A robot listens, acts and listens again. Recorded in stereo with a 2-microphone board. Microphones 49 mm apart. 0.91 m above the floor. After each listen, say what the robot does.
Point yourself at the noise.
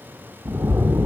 Turn 90° right.
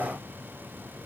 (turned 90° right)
Facing where the splash came from. I can't hear it now.